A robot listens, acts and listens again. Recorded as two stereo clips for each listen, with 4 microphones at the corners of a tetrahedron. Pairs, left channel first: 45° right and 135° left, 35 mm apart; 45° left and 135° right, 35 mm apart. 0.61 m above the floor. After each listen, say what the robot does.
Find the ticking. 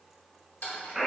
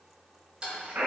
Turn 75° right.
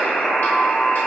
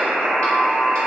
Keep listening.
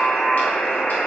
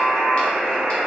Keep listening.
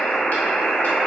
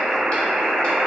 I heard ticking from this way, but can't make it out now.